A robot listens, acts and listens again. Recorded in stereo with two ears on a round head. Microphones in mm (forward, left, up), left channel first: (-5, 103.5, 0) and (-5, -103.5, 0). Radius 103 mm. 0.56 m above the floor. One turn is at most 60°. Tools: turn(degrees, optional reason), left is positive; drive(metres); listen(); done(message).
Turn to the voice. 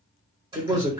turn(degrees=-20, reason="The man speaking: about 20° right or 160° right.")
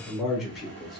done("Found it: a man speaking, straight ahead, 1 to 2 m away.")